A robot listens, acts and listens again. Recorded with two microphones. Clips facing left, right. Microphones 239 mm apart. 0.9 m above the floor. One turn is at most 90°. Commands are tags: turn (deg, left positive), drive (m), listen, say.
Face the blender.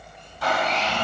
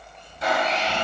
<turn deg="-25"/>
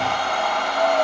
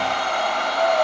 <turn deg="-90"/>
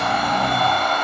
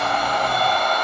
<turn deg="-40"/>
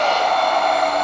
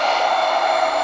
<say>Facing the blender, 2 to 4 m away.</say>